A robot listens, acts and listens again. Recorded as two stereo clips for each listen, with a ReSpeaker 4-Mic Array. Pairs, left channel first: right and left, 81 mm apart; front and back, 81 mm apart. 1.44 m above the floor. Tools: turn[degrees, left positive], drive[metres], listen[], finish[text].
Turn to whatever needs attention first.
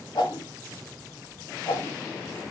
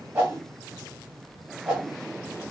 Action: listen[]
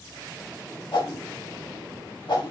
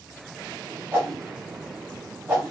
Action: listen[]
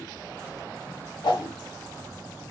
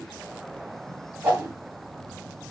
Action: finish[I can't make out anything urgent, only a whoosh.]